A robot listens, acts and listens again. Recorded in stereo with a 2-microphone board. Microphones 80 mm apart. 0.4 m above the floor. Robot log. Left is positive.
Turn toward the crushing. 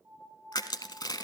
note: The crushing: about 60° left or 120° left.
cmd yaw +60
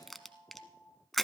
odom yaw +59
end: Found it: crushing, straight ahead, under 1 m away.